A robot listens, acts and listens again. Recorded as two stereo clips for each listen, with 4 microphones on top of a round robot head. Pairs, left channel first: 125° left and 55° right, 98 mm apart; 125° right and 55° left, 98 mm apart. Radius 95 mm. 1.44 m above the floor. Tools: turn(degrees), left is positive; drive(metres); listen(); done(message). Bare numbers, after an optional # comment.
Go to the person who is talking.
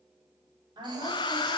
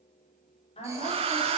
# The woman speaking: 100° right.
turn(-100)
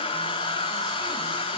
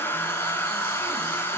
listen()
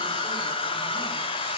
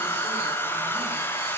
listen()
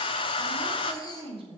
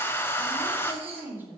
# The woman speaking is now 20° right.
turn(-20)
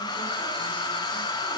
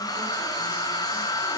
listen()
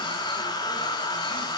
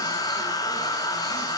listen()
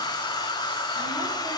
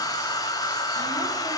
done("Facing where the woman speaking came from. I can't hear it now. I did not reach it.")